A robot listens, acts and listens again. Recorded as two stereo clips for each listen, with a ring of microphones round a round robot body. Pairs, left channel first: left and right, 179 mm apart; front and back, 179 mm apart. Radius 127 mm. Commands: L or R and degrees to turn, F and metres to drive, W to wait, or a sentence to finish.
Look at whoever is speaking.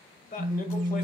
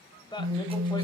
L60
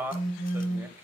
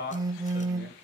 R10
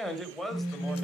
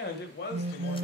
Found it: a man speaking, straight ahead, 1 to 2 m away.